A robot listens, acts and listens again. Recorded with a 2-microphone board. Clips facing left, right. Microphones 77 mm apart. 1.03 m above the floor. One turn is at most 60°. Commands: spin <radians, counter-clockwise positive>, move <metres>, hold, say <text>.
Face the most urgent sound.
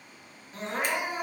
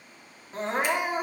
spin -0.61
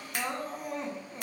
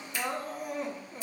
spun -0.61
say Facing the crying, 1 to 2 m away.